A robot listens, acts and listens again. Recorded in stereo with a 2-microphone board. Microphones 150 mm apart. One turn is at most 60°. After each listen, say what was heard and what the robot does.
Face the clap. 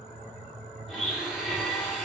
Keep listening.
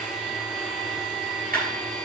Turn 60° right.
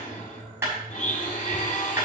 So it is at 15° right. Turn 15° right.
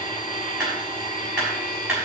Facing the clap.